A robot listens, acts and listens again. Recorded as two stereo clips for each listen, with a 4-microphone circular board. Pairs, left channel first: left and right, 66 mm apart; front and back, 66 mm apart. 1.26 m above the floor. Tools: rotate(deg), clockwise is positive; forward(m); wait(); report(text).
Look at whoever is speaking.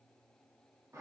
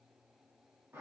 wait()
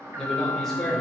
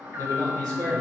rotate(-170)
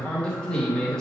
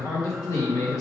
rotate(-10)
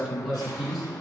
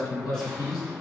report("Facing the man speaking.")